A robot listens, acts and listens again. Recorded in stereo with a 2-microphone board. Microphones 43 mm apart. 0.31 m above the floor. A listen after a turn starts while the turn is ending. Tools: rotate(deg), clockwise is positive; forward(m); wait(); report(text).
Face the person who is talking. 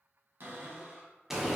wait()
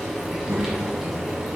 rotate(45)
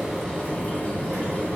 report("Found it: a child speaking, straight ahead.")